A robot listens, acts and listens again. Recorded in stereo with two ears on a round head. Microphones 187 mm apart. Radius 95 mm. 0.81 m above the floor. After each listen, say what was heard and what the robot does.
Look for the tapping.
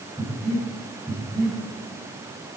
Keep listening.
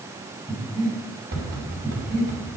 The tapping: about 45° right or 135° right. Turn 45° right.
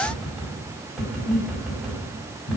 Found it: tapping, straight ahead.